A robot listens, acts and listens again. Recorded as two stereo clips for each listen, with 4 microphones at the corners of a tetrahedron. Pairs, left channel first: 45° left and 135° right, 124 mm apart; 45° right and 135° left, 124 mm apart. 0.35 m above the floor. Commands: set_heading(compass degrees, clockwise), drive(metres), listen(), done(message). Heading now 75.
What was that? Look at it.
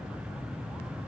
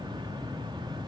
listen()
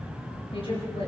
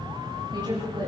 set_heading(350)
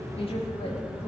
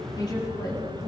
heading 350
set_heading(340)
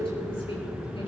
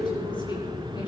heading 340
done("Facing the woman speaking.")